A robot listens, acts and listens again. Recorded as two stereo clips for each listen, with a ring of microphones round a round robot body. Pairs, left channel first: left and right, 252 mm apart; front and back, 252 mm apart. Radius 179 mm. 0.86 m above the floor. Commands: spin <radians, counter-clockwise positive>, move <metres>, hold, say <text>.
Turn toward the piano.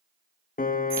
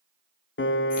spin 0.61
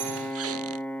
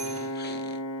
say Facing the piano, 1 to 2 m away.